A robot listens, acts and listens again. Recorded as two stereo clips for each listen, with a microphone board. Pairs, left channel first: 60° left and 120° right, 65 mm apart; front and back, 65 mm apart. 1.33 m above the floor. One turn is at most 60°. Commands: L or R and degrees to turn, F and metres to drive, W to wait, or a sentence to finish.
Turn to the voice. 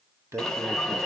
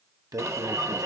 R60
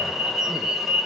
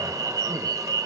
R60
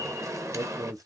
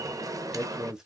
R60
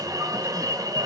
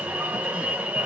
R40
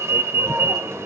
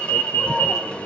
W
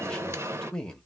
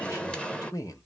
R20
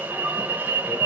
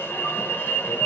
W
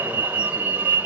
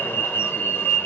W
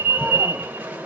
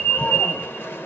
Facing where the man speaking came from. I can't hear it now.